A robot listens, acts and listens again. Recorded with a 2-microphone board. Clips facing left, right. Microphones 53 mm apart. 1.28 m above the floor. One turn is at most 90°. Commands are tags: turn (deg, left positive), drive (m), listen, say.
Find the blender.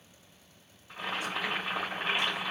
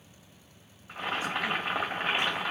<listen/>
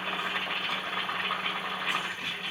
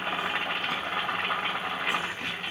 <listen/>
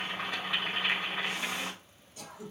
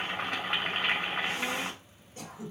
<say>I can't make out a blender to turn to.</say>